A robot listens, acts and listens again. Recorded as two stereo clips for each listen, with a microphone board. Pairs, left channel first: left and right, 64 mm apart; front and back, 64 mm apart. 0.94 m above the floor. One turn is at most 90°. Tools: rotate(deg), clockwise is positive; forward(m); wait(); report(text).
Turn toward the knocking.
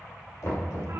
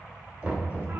rotate(-90)
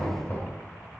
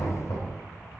rotate(-25)
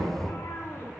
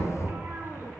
report("Found it: knocking, straight ahead.")